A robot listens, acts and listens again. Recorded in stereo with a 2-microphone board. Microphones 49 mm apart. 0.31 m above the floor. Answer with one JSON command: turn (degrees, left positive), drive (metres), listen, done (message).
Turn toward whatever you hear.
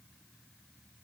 {"listen": true}
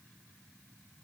{"listen": true}
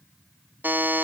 {"turn": -40}
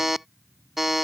{"turn": -10}
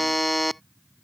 {"done": "Found it: a buzzer, straight ahead."}